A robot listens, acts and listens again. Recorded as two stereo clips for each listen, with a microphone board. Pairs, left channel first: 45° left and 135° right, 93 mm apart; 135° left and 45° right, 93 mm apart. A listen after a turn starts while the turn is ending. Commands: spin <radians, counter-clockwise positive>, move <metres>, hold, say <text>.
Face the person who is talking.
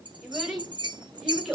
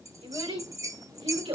spin -0.87
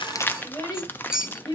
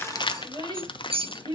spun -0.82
say Found it: a child speaking, straight ahead, 2 to 4 m away.